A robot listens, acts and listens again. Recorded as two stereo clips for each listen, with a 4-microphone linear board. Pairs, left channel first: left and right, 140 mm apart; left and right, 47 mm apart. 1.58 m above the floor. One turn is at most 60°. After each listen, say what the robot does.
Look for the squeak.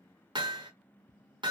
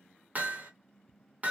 Keep listening.
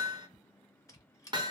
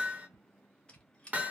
Turn 25° left.
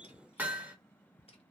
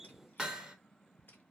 Keep listening.
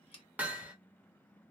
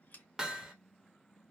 Turn 60° left.
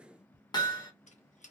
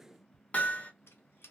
Turn 60° left.
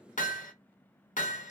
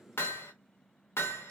Turn 20° left.
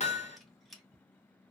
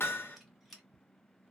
Found it: a squeak, straight ahead, under 1 m away.